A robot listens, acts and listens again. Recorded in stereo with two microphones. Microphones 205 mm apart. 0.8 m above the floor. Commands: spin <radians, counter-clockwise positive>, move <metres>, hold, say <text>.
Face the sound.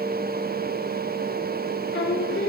spin 1.22
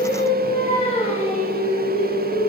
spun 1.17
spin 0.70
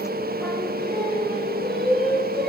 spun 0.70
say Found it: singing, straight ahead, over 4 m away.